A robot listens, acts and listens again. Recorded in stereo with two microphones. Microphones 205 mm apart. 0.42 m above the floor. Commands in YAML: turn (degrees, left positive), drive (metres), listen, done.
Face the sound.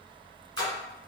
turn: -90
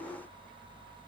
done: "Facing where the splash came from. I can't hear it now."